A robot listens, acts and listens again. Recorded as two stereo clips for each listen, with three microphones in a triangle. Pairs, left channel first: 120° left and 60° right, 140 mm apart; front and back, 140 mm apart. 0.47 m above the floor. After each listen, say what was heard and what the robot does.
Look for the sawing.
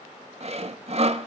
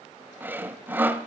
The sawing: 105° right. Turn 105° right.
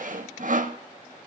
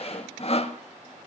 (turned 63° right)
The sawing is now 40° right. Turn 40° right.
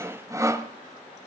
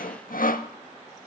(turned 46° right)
Facing the sawing, under 1 m away.